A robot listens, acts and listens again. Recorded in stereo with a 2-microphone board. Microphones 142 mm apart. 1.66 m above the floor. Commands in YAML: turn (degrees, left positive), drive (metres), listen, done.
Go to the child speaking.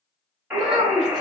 turn: -55
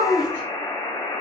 turn: -65
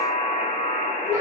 turn: -15
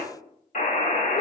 listen: true
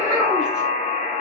drive: 1.0
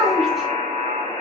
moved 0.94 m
drive: 1.0
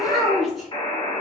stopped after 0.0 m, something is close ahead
done: "Arrived at the child speaking, straight ahead."